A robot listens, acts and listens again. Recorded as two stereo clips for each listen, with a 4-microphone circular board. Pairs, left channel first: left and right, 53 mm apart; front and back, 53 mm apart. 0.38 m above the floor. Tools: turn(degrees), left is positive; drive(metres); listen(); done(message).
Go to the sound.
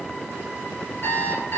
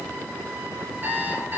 turn(degrees=130)
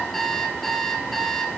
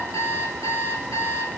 drive(metres=1.0)
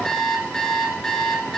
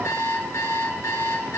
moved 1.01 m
turn(degrees=10)
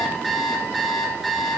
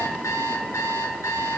drive(metres=1.0)
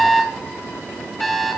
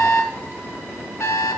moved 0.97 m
drive(metres=1.0)
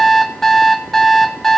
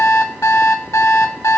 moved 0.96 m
turn(degrees=10)
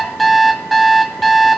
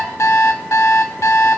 drive(metres=1.0)
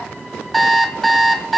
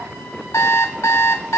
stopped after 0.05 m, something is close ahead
done("Arrived at the alarm clock, straight ahead.")